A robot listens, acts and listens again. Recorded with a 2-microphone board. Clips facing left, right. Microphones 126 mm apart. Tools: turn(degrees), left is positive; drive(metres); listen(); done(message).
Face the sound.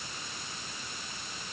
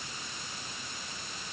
listen()
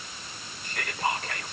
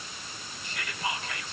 turn(degrees=50)
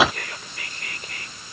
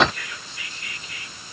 turn(degrees=70)
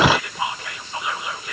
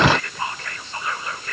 turn(degrees=15)
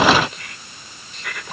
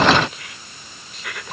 done("Found it: whispering, straight ahead.")